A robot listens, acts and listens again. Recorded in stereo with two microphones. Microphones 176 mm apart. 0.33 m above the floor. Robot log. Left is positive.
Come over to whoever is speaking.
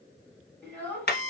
cmd yaw +30
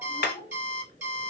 note: So it is at 140° left.
cmd yaw +140
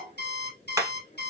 cmd idle
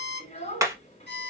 note: The child speaking is now 45° left.
cmd yaw +45
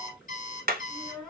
cmd fwd 1.0
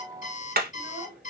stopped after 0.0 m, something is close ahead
end: Something is in my way. I am facing the child speaking but have not reached it.